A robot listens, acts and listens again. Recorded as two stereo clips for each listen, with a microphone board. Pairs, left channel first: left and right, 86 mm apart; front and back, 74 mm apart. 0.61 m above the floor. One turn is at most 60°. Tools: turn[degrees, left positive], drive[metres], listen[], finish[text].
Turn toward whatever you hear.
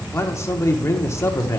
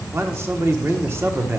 Thought: The man speaking: 135° left.
Action: turn[60]
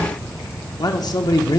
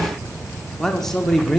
Thought: The man speaking is now 85° left.
Action: turn[60]
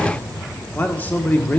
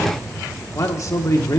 Thought: The man speaking is now 25° left.
Action: turn[25]
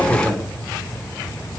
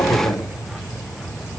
Action: finish[Facing the man speaking.]